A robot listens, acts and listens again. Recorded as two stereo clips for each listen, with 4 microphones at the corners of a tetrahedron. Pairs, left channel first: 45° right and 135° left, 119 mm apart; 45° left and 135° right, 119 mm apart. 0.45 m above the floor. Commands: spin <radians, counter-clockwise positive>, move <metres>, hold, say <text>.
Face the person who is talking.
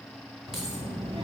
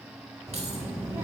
spin 2.79
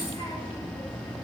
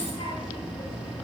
say Facing the child speaking.